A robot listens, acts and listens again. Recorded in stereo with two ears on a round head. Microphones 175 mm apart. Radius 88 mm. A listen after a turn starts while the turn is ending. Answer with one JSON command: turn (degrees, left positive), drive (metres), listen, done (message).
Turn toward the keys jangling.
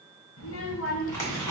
{"listen": true}
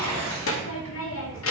{"listen": true}
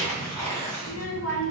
{"done": "I can't make out keys jangling, only a child speaking and tearing paper."}